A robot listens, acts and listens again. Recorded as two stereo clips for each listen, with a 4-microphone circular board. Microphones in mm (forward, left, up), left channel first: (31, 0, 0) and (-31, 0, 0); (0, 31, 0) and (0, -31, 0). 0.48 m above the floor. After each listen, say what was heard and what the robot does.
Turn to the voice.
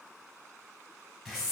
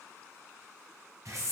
Keep listening.
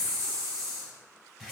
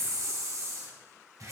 Keep listening.
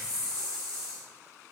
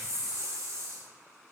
I can't make out anyone speaking to turn to.